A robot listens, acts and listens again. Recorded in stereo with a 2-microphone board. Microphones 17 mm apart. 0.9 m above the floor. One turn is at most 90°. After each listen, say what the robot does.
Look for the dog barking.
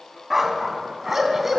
Turn 20° right.
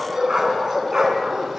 Turn 35° right.
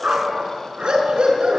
Turn 90° right.
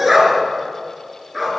Facing the dog barking.